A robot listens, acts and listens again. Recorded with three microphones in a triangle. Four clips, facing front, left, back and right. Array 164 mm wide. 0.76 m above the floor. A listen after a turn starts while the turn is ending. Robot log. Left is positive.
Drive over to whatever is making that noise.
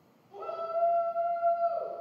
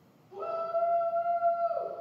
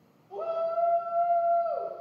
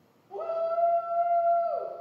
note: The shout: 135° right.
cmd yaw -135
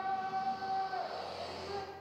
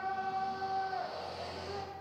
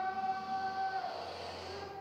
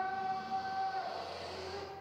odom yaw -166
note: The shout is now 30° left.
cmd yaw +30
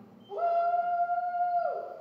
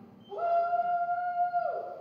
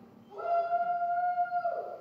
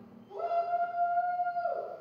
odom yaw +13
note: The shout is now 20° left.
cmd yaw +20
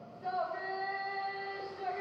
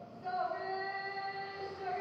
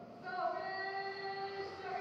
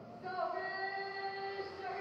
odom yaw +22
cmd fwd 1.0
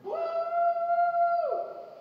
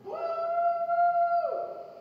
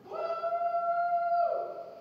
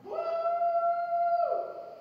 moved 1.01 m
cmd fwd 1.0
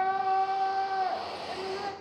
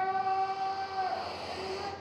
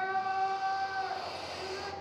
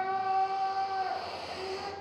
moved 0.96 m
cmd fwd 1.0
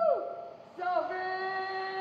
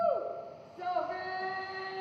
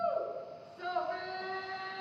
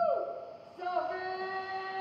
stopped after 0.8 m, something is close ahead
end: I am next to the shout.